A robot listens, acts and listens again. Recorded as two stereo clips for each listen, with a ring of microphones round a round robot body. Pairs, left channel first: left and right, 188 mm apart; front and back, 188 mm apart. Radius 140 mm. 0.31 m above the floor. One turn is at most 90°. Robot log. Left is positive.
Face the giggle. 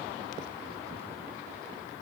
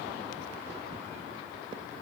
cmd idle
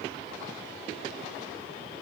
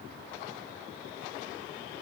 cmd idle
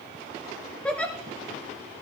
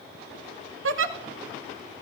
note: The giggle: 175° left.
cmd yaw +90
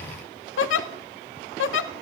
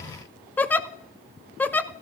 note: The giggle is now 80° left.
cmd yaw +80
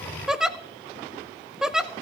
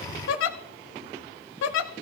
end: Facing the giggle.